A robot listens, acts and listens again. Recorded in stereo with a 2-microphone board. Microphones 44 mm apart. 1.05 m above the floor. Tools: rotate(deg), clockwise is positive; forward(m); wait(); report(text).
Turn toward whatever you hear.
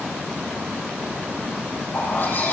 rotate(-45)
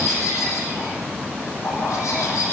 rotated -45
rotate(-90)
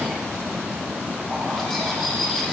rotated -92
report("Found it: a bird, straight ahead.")